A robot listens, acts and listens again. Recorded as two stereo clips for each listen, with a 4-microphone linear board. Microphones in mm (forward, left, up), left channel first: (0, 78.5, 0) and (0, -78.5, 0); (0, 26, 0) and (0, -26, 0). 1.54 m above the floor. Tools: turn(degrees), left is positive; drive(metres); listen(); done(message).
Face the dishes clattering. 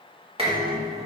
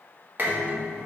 turn(degrees=-40)
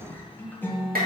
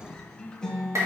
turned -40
turn(degrees=-100)
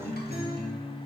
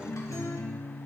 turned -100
listen()
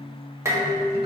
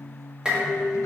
turn(degrees=-20)
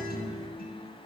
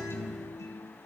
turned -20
listen()
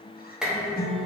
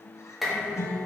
done("Found it: dishes clattering, straight ahead.")